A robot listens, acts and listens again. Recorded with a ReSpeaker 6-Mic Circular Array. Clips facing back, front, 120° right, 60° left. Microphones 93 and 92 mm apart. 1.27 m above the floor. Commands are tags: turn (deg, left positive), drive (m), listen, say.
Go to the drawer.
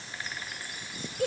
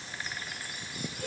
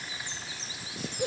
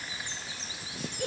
<listen/>
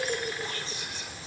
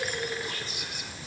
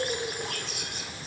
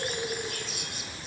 <listen/>
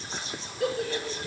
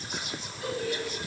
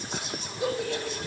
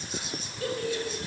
<say>I can't make out a drawer, only whispering and a giggle.</say>